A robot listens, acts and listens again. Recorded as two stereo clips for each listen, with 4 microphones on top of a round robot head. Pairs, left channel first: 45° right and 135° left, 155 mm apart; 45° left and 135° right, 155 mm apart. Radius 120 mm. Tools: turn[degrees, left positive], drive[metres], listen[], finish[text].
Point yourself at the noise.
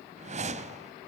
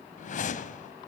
Thought: The whoosh: 90° left.
Action: turn[90]
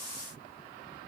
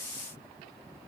Action: listen[]
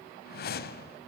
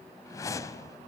Thought: The whoosh is now 25° right.
Action: turn[-25]
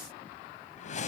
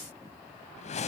Action: finish[Facing the whoosh.]